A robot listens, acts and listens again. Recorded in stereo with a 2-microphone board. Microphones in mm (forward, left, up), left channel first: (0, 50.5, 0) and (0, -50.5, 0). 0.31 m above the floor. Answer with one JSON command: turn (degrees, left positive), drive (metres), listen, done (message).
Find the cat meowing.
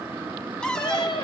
{"turn": 50}
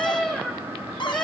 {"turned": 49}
{"done": "Facing the cat meowing, 2 to 4 m away."}